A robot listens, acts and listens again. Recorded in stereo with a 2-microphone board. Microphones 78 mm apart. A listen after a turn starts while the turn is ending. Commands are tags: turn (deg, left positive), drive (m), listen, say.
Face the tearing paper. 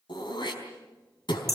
<listen/>
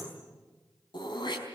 <listen/>
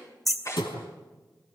<turn deg="40"/>
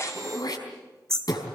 <listen/>
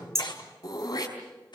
<turn deg="100"/>
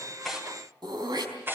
<turn deg="-30"/>
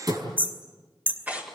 <turn deg="-20"/>
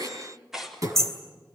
<say>Found it: tearing paper, straight ahead, 2 to 4 m away.</say>